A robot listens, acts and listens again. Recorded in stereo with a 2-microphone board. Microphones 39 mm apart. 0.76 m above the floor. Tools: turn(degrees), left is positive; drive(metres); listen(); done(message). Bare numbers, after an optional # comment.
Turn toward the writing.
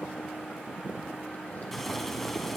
listen()
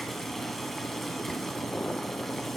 listen()
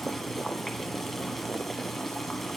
done("I can't make out writing, only boiling.")